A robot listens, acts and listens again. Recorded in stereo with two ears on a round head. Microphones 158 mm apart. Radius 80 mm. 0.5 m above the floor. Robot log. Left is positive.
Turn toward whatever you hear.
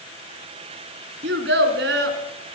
note: The child speaking: about 75° right or 105° right.
cmd yaw -75
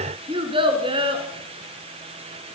note: So it is at 30° right.
cmd yaw -30
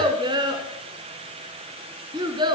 note: The child speaking is now 25° right.
cmd yaw -25
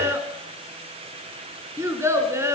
note: The child speaking is now 15° right.
cmd yaw -15
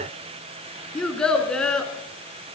end: Facing the child speaking, 2 to 4 m away.